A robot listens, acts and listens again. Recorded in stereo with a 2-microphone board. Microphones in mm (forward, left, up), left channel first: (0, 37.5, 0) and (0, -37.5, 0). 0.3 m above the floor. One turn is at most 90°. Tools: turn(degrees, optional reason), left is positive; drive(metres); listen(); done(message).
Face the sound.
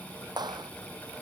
turn(degrees=-70, reason="The clap: about 70° right or 110° right.")
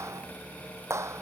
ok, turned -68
turn(degrees=-40, reason="So it is at 40° right.")
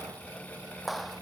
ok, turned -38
done("Facing the clap.")